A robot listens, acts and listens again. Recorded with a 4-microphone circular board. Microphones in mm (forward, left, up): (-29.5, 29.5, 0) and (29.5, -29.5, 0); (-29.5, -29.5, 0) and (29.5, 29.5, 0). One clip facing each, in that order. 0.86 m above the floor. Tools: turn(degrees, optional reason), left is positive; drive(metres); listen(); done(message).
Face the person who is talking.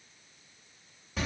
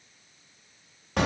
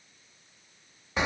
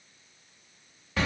listen()
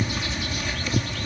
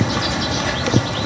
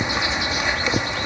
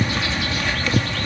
listen()
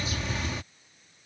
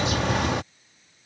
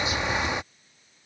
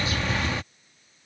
done("I can't make out anyone speaking, only a bird.")